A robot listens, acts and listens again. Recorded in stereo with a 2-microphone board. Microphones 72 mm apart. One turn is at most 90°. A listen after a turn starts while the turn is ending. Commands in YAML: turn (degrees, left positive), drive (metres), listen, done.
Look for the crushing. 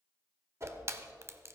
turn: -35
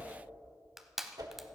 done: "Found it: crushing, straight ahead, under 1 m away."